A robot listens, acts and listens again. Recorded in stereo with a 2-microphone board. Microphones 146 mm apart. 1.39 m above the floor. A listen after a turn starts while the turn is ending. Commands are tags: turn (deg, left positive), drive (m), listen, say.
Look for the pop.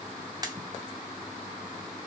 <turn deg="-25"/>
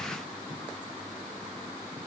<listen/>
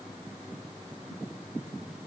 <say>I heard a pop, but can't make it out now. It was about straight ahead or 130° right.</say>